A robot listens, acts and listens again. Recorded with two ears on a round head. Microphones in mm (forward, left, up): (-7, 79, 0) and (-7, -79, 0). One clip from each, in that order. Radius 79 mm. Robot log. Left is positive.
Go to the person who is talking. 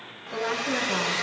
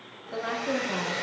cmd yaw -30
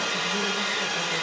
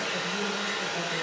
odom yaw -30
cmd idle
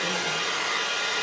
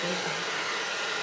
cmd idle
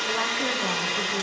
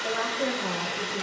end: I heard a woman speaking, but can't make it out now. It was about 25° left or 145° right. I did not reach it.